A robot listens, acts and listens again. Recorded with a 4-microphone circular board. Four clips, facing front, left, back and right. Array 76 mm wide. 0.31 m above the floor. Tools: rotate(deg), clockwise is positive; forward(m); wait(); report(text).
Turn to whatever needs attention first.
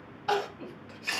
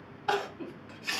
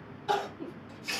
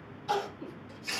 rotate(-60)
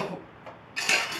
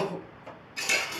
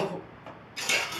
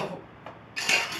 report("Found it: crying, straight ahead, 1 to 2 m away.")